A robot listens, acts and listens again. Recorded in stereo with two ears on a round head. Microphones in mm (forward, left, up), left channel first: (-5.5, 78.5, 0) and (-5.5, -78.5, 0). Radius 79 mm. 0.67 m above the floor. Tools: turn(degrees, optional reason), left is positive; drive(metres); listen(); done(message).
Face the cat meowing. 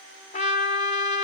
listen()
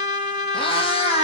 turn(degrees=40, reason="The cat meowing: about 40° left or 140° left.")
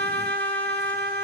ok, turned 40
listen()
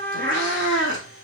turn(degrees=100, reason="So it is at 100° left.")
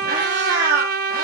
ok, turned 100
turn(degrees=-50, reason="The cat meowing is now 50° right.")
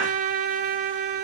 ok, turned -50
listen()
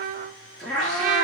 done("Facing the cat meowing, over 4 m away.")